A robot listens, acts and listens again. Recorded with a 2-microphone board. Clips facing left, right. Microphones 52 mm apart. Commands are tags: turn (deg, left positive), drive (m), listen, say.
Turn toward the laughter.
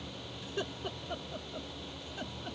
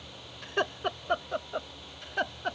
<turn deg="-70"/>
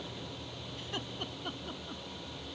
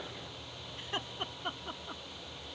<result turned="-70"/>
<turn deg="-30"/>
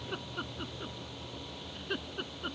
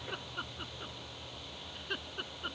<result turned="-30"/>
<say>Facing the laughter.</say>